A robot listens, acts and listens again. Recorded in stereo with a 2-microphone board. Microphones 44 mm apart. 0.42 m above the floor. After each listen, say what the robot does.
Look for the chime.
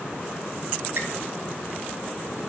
Keep listening.
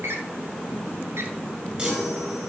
Turn 25° right.
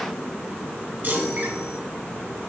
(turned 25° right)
Turn 135° right.
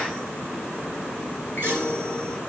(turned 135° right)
Turn 50° right.
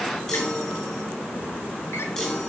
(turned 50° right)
Turn 15° left.
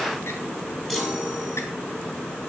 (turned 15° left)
Facing the chime.